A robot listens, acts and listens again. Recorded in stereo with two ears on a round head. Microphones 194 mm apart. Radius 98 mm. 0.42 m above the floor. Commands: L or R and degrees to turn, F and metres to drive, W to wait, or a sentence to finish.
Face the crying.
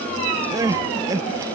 R15
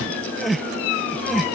Found it: crying, straight ahead.